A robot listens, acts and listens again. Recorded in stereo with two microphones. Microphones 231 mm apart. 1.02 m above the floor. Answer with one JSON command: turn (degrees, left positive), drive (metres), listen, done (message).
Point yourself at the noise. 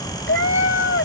{"turn": 60}
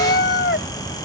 {"turn": 50}
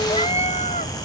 {"turn": 30}
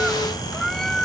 {"done": "Facing the cat meowing."}